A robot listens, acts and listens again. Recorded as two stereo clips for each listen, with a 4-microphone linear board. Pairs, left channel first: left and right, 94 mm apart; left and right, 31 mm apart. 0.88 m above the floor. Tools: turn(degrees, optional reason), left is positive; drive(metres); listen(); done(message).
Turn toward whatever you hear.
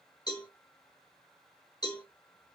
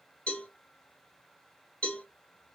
turn(degrees=45, reason="The cowbell: about 45° left or 135° left.")
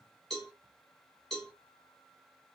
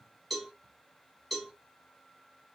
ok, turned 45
done("Found it: a cowbell, straight ahead, 2 to 4 m away.")